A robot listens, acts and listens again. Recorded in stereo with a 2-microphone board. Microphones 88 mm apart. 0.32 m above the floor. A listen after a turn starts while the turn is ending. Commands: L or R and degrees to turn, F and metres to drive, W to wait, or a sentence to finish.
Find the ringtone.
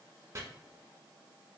W
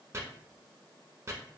W
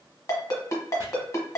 L40
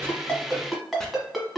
Facing the ringtone, 1 to 2 m away.